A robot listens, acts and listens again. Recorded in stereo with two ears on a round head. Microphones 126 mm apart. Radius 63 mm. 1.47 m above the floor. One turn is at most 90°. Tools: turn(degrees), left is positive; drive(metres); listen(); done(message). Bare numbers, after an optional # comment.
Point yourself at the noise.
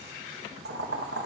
turn(-90)
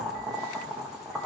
done("Found it: boiling, straight ahead.")